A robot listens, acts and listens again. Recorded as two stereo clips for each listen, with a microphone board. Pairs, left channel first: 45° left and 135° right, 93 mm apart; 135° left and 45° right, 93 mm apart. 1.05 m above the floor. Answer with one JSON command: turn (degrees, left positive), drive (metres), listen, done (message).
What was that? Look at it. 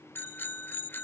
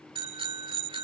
{"turn": -20}
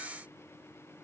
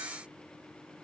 {"listen": true}
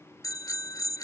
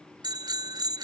{"done": "Found it: a bicycle bell, straight ahead."}